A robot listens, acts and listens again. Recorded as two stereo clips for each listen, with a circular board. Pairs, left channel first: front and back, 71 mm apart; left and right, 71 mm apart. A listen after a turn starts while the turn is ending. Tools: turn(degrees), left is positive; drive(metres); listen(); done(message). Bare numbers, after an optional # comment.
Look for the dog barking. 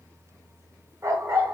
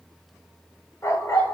# The dog barking: 135° left.
turn(135)
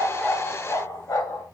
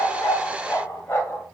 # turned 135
# The dog barking is now 30° left.
turn(30)
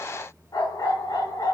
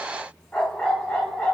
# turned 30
# The dog barking is now 10° left.
turn(10)
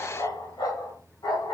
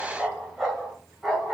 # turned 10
# The dog barking is now 10° right.
turn(-10)
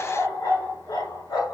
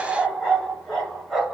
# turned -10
done("Found it: a dog barking, straight ahead, over 4 m away.")